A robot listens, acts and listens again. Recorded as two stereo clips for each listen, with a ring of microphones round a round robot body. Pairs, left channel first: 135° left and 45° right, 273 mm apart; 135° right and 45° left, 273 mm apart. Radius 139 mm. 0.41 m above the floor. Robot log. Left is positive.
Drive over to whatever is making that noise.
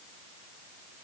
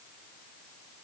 cmd idle
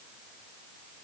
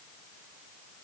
cmd idle
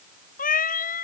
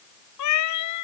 note: The cat meowing: 165° right.
cmd yaw -165
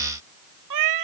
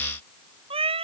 note: The cat meowing is now 25° right.
cmd yaw -25
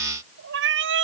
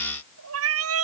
cmd fwd 1.0
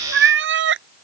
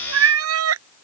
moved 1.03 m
cmd fwd 1.0
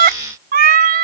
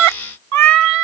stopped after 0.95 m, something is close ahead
note: The cat meowing is now 15° left.
cmd yaw +15
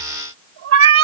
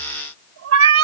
end: Arrived at the cat meowing, straight ahead.